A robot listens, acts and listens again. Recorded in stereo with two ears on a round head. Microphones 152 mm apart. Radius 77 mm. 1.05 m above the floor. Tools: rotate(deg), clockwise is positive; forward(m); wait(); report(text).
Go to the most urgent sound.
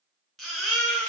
rotate(-30)
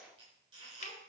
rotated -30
wait()
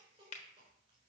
wait()
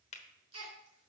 rotate(30)
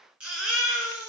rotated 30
forward(1.0)
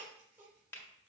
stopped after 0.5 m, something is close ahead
wait()
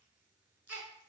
rotate(15)
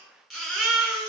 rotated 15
report("Blocked. The baby crying is further on, straight ahead.")